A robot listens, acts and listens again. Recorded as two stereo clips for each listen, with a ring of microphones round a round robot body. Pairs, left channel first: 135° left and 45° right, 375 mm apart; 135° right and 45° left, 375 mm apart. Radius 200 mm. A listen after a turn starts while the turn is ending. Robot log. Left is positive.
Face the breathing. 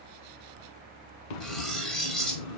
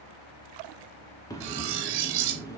note: The breathing: 145° left.
cmd yaw +145
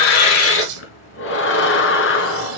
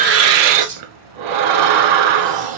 note: The breathing is now 75° left.
cmd yaw +75
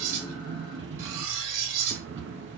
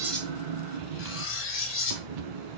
note: The breathing is now 15° left.
cmd yaw +15
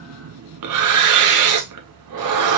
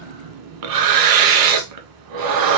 end: Facing the breathing, 1 to 2 m away.